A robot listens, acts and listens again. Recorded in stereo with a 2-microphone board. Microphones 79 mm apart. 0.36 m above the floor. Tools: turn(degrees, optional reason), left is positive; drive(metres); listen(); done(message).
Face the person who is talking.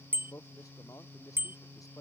turn(degrees=45, reason="The man speaking: about 45° left or 135° left.")
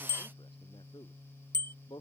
turn(degrees=90, reason="So it is at 90° left.")
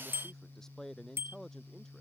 done("Found it: a man speaking, straight ahead.")